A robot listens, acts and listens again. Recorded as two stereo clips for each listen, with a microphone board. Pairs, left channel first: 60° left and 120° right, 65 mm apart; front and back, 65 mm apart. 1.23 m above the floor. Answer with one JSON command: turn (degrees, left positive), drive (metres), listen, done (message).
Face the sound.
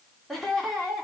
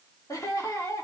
{"turn": -30}
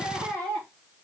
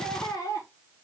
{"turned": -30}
{"turn": -10}
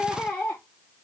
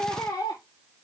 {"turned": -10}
{"turn": -10}
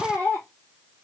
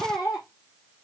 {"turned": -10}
{"turn": -10}
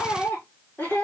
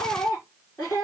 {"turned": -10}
{"done": "Found it: laughter, straight ahead, 2 to 4 m away."}